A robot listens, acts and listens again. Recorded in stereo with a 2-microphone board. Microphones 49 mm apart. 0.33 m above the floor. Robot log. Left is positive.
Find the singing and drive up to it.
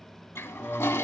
note: The singing: about 20° left or 160° left.
cmd yaw +20
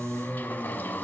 note: So it is at 140° left.
cmd yaw +140
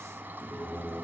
note: The singing is now 55° left.
cmd yaw +55
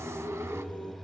note: The singing is now 25° left.
cmd yaw +25
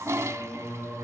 note: The singing is now 10° left.
cmd yaw +10
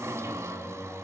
cmd fwd 1.0
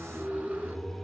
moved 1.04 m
cmd fwd 1.0
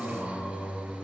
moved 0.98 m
cmd fwd 1.0
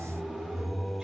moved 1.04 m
cmd fwd 1.0
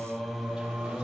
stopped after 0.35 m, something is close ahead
end: I am next to the singing.